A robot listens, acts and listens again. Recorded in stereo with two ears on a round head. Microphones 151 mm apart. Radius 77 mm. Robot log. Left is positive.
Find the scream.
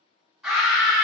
cmd yaw -30
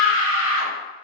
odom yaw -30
note: So it is at 145° right.
cmd yaw -145
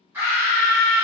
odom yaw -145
note: The scream is now 15° right.
cmd yaw -15
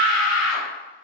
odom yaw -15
end: Found it: a scream, straight ahead, 1 to 2 m away.